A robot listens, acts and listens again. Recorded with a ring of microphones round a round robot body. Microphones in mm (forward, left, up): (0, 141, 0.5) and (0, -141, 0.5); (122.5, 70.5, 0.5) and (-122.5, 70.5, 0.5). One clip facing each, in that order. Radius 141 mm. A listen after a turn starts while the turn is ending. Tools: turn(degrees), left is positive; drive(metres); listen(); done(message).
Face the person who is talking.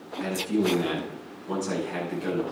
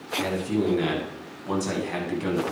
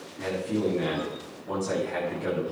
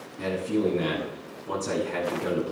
turn(degrees=-100)
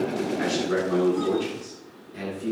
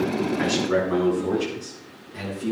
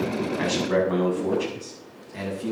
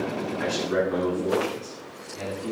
done("Facing the man speaking.")